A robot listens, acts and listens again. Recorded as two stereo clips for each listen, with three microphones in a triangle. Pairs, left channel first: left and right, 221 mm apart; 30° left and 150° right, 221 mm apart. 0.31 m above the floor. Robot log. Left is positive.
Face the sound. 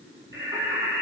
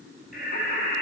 note: The singing: 10° right.
cmd yaw -10
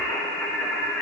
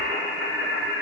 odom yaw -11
note: The singing is now 10° left.
cmd yaw +10
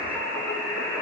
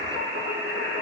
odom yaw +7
note: The singing is now 10° left.
cmd yaw +10
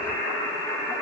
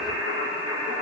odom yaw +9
note: The singing is now 10° left.
cmd yaw +10
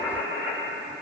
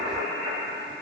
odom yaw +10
end: Found it: singing, straight ahead, 2 to 4 m away.